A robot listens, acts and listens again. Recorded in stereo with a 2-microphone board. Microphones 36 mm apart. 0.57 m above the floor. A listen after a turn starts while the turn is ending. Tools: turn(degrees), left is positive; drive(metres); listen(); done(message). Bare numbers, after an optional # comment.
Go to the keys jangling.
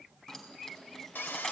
# The keys jangling: about 15° left or 165° left.
turn(15)
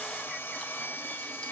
listen()
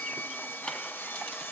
# So it is at 150° left.
turn(150)
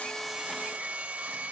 listen()
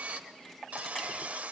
listen()
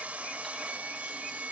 done("I heard keys jangling from this way, but can't make it out now. I did not reach it.")